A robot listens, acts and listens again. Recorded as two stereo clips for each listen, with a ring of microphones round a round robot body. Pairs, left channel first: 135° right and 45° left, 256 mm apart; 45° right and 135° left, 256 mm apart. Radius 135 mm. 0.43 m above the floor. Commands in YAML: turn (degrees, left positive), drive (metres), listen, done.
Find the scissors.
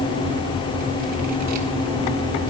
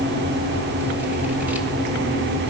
listen: true
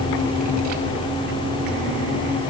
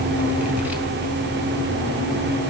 listen: true
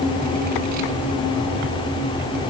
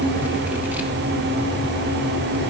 done: "I can't make out scissors."